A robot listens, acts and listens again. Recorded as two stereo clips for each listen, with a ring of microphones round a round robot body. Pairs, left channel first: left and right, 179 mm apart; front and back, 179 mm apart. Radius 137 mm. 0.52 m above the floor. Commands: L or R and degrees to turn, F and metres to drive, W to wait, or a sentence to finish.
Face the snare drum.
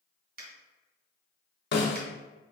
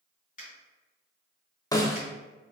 L70
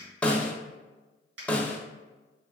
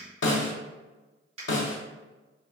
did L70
Facing the snare drum.